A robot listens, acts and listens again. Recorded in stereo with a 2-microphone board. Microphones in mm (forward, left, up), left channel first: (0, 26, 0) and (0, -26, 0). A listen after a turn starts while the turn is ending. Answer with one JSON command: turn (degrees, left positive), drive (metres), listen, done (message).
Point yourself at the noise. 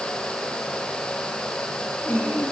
{"turn": 40}
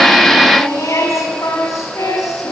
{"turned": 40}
{"turn": 100}
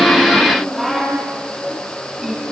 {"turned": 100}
{"done": "Found it: singing, straight ahead, over 4 m away."}